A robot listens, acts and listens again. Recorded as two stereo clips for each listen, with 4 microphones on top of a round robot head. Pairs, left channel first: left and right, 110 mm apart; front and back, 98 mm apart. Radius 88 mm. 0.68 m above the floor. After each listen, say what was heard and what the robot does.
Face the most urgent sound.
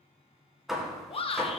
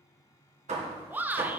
The shout: 110° left. Turn 110° left.
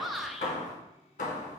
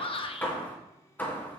Facing the shout.